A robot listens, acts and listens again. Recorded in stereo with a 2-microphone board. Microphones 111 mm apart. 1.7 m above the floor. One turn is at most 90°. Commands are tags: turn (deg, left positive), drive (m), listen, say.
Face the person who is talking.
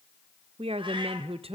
<turn deg="-60"/>
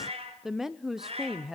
<say>Found it: a woman speaking, straight ahead.</say>